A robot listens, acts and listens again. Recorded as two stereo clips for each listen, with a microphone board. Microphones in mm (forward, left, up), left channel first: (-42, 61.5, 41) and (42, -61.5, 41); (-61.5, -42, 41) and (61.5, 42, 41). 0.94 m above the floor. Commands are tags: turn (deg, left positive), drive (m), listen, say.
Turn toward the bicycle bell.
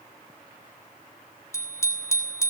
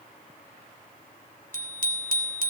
<turn deg="55"/>
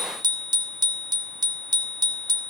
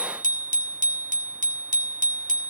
<say>Facing the bicycle bell, 2 to 4 m away.</say>